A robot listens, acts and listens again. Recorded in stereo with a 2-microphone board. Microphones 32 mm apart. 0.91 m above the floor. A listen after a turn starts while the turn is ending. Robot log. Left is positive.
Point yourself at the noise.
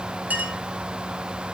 note: The clink: about 60° right or 120° right.
cmd yaw -60
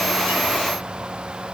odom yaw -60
cmd idle
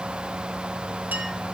cmd idle
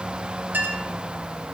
note: So it is at 65° right.
cmd yaw -65
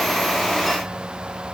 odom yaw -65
cmd idle
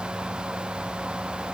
cmd idle
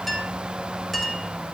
end: Found it: a clink, straight ahead.